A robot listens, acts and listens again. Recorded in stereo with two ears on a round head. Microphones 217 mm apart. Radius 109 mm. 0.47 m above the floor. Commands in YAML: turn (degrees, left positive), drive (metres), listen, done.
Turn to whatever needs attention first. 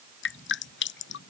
listen: true
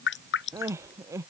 turn: -30
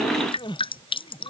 turn: 20
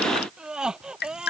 done: "Found it: crying, straight ahead."